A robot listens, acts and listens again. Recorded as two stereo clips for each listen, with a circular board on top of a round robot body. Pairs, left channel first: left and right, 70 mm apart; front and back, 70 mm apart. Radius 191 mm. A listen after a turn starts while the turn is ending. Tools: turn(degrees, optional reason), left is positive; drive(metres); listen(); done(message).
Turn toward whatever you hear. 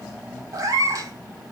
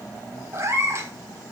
turn(degrees=-130, reason="The cat meowing: 130° right.")
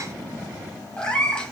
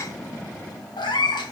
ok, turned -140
turn(degrees=10, reason="The cat meowing is now 10° left.")
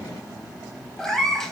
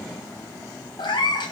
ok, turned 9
done("Found it: a cat meowing, straight ahead, 1 to 2 m away.")